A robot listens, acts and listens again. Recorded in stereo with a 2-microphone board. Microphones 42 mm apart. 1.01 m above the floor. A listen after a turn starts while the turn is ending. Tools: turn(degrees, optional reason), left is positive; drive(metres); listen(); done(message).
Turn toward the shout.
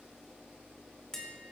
listen()
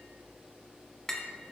listen()
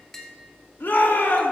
turn(degrees=60, reason="The shout: about 60° left or 120° left.")
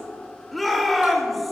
done("Facing the shout.")